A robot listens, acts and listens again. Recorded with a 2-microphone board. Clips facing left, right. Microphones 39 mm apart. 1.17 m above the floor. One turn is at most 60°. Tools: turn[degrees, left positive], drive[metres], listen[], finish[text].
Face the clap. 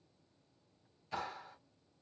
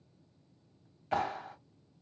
Thought: The clap: about 65° right or 115° right.
Action: turn[-60]
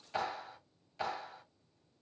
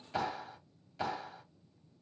Action: finish[Facing the clap, 2 to 4 m away.]